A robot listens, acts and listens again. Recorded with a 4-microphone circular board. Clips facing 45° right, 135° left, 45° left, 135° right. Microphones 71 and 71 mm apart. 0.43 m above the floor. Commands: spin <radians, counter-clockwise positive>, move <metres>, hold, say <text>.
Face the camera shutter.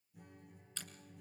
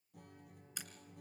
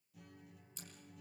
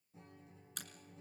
spin -2.62
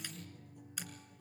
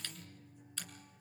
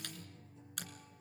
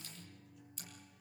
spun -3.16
spin 0.52
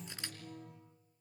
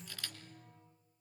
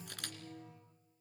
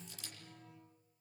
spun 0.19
spin 0.35
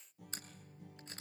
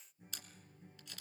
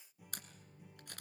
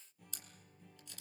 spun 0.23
spin 0.17
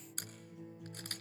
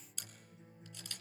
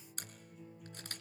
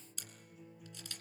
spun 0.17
say Found it: a camera shutter, straight ahead.